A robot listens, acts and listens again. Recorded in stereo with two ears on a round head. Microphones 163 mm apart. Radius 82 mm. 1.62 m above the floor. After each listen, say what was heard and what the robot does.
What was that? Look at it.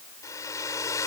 The hair dryer: about 20° left or 160° left. Turn 20° left.
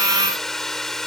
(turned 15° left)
Found it: a hair dryer, straight ahead.